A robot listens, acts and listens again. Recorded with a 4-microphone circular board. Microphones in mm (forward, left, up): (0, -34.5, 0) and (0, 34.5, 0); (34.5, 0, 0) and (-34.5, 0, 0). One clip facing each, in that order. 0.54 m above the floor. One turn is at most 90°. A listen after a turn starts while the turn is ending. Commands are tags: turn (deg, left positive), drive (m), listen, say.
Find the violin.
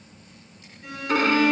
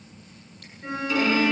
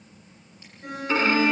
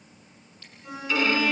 <turn deg="-55"/>
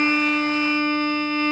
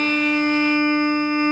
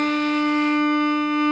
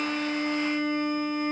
<turn deg="20"/>
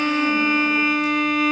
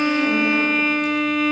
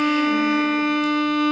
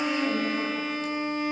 <say>Found it: a violin, straight ahead, 2 to 4 m away.</say>